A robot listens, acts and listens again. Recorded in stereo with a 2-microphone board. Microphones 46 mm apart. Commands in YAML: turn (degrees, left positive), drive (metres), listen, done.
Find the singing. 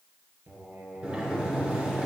turn: -55
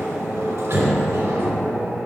listen: true
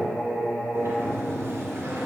turn: -75
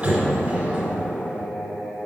done: "Found it: singing, straight ahead, over 4 m away."